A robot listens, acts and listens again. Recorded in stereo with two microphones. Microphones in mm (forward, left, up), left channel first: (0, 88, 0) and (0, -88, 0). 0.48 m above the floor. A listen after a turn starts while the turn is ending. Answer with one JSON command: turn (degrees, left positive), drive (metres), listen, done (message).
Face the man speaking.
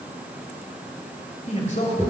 {"turn": 45}
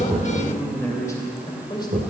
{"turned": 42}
{"turn": 25}
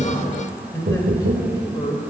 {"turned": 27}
{"turn": 25}
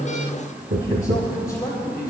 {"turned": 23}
{"turn": 20}
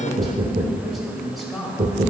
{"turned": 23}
{"done": "Found it: a man speaking, straight ahead, 2 to 4 m away."}